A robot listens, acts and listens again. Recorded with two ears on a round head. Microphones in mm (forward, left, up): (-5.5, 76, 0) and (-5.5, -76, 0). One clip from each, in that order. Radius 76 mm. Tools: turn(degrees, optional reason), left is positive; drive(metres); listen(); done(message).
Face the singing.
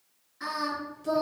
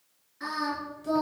turn(degrees=30)
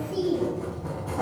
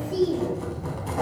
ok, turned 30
turn(degrees=-25, reason="So it is at 25° right.")
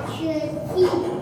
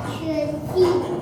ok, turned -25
turn(degrees=-20, reason="The singing is now 20° right.")
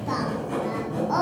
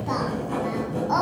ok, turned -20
turn(degrees=-20, reason="The singing is now 20° right.")
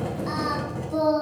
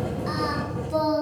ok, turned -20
turn(degrees=-20, reason="The singing is now 20° right.")
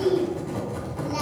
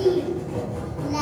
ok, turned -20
done("Found it: singing, straight ahead.")